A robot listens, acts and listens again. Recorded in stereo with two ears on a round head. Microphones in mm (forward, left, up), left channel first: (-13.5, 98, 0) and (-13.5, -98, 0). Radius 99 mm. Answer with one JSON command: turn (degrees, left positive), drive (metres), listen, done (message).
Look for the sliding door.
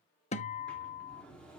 {"turn": 30}
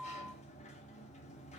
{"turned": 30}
{"turn": 145}
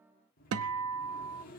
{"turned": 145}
{"turn": 40}
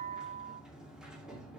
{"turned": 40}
{"done": "Found it: a sliding door, straight ahead, 2 to 4 m away."}